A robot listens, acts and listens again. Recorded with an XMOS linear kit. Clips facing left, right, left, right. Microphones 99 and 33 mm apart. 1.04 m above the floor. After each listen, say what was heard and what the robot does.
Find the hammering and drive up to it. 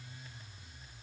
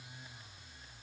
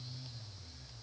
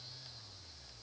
Keep listening.
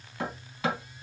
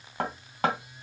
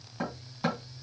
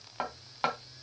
The hammering: about 60° right or 120° right. Turn 60° right.
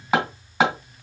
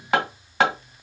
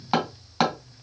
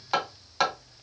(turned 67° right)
Drive 1.0 m forward.
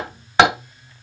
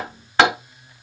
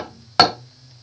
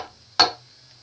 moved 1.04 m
The hammering is now 15° left. Turn 15° left.
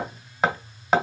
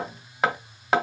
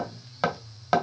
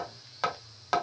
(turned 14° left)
Drive 1.0 m forward.
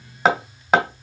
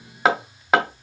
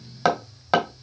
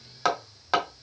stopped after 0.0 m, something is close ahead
Arrived at the hammering, straight ahead.